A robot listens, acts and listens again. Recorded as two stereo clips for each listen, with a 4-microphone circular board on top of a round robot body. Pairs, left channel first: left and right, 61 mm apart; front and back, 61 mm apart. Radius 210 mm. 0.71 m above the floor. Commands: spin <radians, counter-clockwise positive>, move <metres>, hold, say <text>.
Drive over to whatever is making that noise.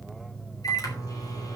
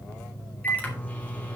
spin 1.13
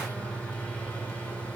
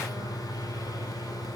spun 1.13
spin 0.35
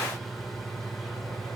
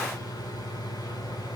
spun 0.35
move 1.0
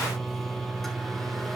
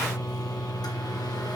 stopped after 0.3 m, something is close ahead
say Blocked. The microwave is further on, straight ahead.